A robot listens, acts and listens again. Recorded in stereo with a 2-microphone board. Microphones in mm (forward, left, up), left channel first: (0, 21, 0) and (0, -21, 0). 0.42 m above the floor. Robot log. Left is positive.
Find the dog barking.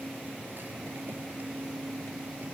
cmd idle
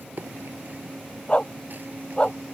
note: The dog barking: about 25° left or 155° left.
cmd yaw +25
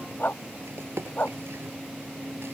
note: So it is at 125° left.
cmd yaw +125
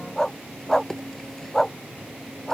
note: The dog barking is now 10° left.
cmd yaw +10
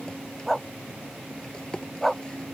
end: Facing the dog barking.